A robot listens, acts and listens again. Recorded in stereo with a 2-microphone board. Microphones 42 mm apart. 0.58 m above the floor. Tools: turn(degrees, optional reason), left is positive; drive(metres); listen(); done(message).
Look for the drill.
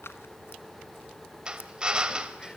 turn(degrees=-20, reason="The drill: about 20° right or 160° right.")
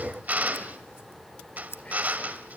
turn(degrees=-140, reason="So it is at 140° right.")
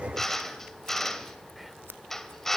turn(degrees=10, reason="The drill is now 10° left.")
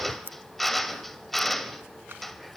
done("Facing the drill.")